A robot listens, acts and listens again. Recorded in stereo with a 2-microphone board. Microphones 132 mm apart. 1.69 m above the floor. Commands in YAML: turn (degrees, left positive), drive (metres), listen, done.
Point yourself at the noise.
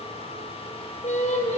turn: 65
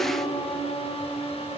turn: 40
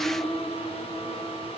done: "Facing the singing, over 4 m away."